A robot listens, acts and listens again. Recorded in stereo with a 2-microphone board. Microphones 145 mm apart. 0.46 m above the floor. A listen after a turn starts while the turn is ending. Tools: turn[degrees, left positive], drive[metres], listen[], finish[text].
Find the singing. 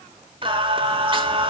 Thought: The singing: about 35° right or 145° right.
Action: turn[-35]
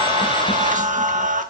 Thought: So it is at 105° right.
Action: turn[-105]
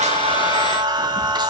Thought: The singing is now 35° right.
Action: turn[-35]
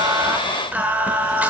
Thought: The singing is now 10° right.
Action: turn[-10]
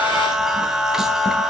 Action: finish[Found it: singing, straight ahead.]